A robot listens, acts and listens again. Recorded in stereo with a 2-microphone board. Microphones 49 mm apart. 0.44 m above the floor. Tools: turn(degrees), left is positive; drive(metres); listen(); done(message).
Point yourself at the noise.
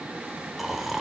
turn(degrees=-30)
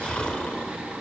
turn(degrees=25)
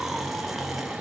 done("Found it: snoring, straight ahead.")